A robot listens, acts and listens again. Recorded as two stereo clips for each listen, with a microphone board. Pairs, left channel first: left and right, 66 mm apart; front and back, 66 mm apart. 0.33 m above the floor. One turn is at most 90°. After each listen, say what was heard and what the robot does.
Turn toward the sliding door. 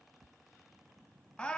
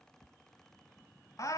Keep listening.
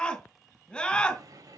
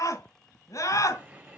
The sliding door: 115° right. Turn 90° right.
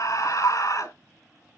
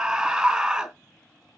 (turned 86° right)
Nothing new. It was at 30° right. Turn 30° right.
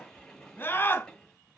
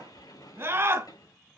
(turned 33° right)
Found it: a sliding door, straight ahead, over 4 m away.